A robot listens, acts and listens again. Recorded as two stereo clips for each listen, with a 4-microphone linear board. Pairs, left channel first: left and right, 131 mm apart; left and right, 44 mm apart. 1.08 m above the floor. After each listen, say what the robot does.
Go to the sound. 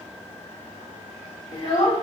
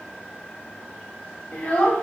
Turn 50° left.
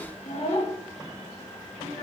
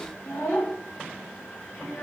Turn 80° left.
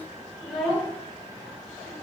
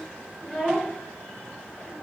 Drive 1.0 m forward.
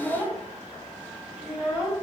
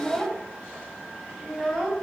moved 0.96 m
Turn 10° right.
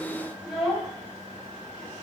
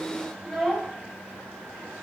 Drive 1.0 m forward.
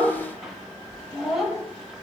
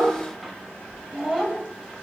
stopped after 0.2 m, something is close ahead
I am next to the child speaking.